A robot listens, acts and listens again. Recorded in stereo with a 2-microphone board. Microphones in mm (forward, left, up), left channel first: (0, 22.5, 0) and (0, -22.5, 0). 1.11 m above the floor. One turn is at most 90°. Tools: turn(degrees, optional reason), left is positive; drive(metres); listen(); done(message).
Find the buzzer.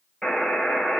turn(degrees=30)
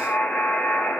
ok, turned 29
turn(degrees=90, reason="So it is at 145° left.")
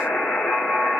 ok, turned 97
turn(degrees=50, reason="The buzzer is now 50° left.")
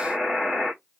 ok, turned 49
done("Facing the buzzer, 2 to 4 m away.")